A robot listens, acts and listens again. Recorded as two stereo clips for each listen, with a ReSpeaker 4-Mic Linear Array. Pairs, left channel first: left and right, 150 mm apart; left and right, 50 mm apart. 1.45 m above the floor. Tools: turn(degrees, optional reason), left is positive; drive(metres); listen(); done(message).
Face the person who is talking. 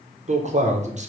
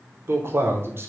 turn(degrees=-50, reason="The man speaking: about 50° right or 130° right.")
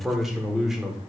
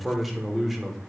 done("Facing the man speaking, 1 to 2 m away.")